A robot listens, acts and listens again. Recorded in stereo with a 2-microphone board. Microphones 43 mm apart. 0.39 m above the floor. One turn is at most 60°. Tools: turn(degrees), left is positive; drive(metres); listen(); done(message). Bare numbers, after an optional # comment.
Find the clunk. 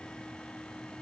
listen()
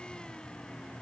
listen()
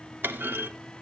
# The clunk: about 55° right or 125° right.
turn(-55)
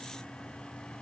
listen()
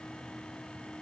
done("I heard a clunk, but can't make it out now. It was about straight ahead or 70° right.")